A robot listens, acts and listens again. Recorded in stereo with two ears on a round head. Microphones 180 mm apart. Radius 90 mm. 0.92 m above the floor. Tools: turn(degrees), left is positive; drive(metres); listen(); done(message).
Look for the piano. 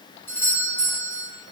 listen()
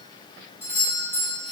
listen()
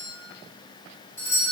done("I can't make out a piano to turn to.")